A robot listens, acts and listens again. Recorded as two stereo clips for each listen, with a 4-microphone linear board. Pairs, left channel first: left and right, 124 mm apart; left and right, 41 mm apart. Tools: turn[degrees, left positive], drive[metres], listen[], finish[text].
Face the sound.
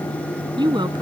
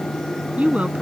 Thought: The woman speaking: about 35° right or 145° right.
Action: turn[-35]
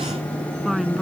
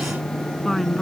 Action: finish[Found it: a woman speaking, straight ahead.]